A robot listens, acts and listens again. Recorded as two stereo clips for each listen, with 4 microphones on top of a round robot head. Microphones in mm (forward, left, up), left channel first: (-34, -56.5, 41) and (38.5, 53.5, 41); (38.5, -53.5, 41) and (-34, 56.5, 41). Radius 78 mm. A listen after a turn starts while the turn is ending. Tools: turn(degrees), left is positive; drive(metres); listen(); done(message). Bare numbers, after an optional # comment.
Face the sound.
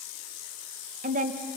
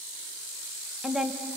# The woman speaking: 40° left.
turn(40)
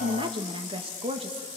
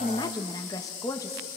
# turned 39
# The woman speaking is now 10° left.
turn(10)
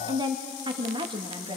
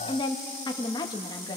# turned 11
done("Facing the woman speaking.")